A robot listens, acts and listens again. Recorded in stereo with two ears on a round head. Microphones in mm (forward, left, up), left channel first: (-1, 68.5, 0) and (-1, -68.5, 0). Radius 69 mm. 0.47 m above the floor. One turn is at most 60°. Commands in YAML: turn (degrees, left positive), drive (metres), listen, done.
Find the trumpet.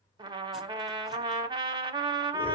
turn: -30
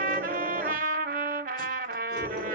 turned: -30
turn: -60
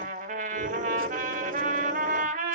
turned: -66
turn: -55
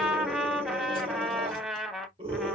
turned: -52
done: "Found it: a trumpet, straight ahead."